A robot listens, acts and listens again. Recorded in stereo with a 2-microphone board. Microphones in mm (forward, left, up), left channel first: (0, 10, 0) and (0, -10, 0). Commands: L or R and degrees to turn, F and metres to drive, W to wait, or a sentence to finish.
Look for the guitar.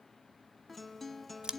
L30
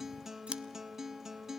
R20
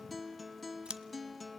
Found it: a guitar, straight ahead.